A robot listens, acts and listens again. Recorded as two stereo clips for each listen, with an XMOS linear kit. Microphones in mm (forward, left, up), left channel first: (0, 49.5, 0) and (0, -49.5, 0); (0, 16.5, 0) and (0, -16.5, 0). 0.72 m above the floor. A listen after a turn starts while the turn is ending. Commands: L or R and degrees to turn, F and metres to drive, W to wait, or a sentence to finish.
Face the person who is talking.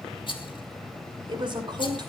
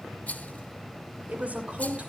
R50
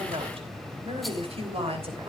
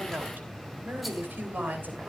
R75
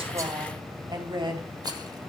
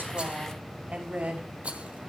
R45
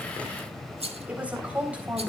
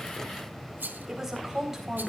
R15
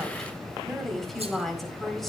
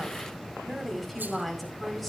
Found it: a woman speaking, straight ahead, over 4 m away.